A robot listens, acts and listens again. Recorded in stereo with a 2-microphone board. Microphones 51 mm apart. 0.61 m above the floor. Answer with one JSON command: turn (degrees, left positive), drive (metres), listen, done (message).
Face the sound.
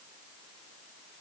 {"listen": true}
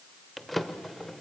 {"turn": 30}
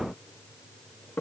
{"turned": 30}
{"turn": 145}
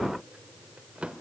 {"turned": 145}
{"turn": -25}
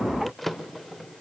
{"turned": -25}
{"done": "Facing the drawer, under 1 m away."}